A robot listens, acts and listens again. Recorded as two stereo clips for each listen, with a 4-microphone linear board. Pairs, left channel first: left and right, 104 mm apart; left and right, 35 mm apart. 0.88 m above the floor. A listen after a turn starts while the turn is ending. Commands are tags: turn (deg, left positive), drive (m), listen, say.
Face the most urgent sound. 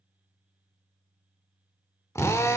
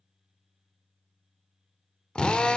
<listen/>
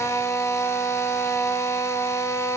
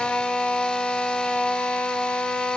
<listen/>
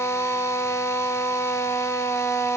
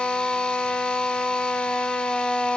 <say>I can't make out anything urgent to turn to.</say>